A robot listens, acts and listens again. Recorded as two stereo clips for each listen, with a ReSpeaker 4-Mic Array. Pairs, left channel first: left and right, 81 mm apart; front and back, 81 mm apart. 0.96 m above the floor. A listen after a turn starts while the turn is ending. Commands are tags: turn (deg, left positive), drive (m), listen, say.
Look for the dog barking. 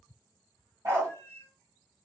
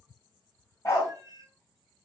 <turn deg="-45"/>
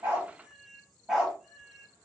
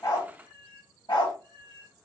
<turn deg="-10"/>
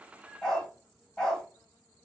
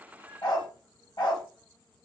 <say>Facing the dog barking.</say>